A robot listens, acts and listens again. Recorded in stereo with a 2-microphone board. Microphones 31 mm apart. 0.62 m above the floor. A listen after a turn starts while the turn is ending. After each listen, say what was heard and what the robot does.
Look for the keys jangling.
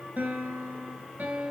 Keep listening.
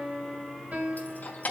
The keys jangling: about 55° left or 125° left. Turn 55° left.
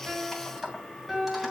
So it is at 10° right. Turn 10° right.
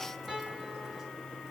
Keep listening.
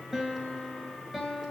Keep listening.
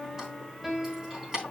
The keys jangling is now 20° right. Turn 20° right.
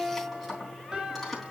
Facing the keys jangling, 2 to 4 m away.